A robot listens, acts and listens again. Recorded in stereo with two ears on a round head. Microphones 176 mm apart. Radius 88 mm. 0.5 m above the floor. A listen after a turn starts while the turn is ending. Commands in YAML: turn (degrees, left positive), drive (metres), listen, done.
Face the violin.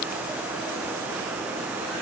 listen: true
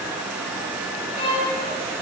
turn: 30
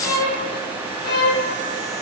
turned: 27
turn: 125
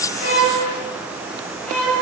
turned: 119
done: "Found it: a violin, straight ahead."